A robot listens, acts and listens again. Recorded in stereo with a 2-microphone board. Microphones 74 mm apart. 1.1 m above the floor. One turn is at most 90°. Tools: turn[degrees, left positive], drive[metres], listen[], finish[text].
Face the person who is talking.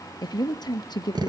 Thought: The woman speaking: about 70° left or 110° left.
Action: turn[70]
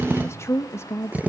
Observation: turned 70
Thought: So it is at 40° left.
Action: turn[40]
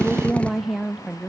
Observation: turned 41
Action: finish[Found it: a woman speaking, straight ahead, 1 to 2 m away.]